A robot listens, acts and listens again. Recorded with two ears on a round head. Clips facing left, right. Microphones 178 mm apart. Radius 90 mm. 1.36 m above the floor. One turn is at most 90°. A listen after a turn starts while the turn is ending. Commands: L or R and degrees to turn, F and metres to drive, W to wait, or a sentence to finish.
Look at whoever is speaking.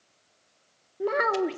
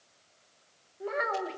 L70
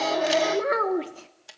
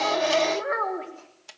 L45
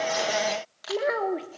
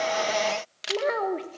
Found it: a child speaking, straight ahead.